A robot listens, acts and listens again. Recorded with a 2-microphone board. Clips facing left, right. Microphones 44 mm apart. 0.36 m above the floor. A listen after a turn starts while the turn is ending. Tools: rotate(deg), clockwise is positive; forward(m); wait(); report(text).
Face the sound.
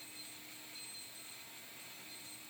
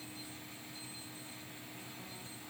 wait()
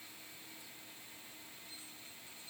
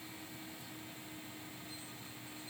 wait()
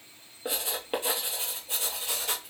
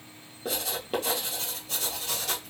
rotate(-20)
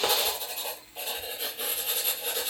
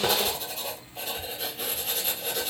report("Found it: writing, straight ahead, 1 to 2 m away.")